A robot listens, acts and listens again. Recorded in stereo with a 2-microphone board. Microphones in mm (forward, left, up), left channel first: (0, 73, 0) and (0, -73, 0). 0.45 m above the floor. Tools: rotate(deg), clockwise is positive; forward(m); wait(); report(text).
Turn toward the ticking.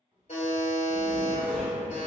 wait()
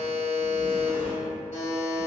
wait()
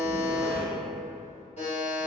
report("I can't make out ticking, only a buzzer and a zipper.")